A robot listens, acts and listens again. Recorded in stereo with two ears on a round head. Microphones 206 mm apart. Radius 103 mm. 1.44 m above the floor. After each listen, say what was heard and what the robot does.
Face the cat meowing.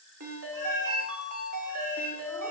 Turn 30° right.
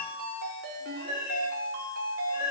So it is at 30° left. Turn 30° left.
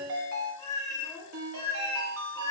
The cat meowing is now 15° left. Turn 15° left.
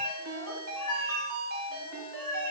Facing the cat meowing, over 4 m away.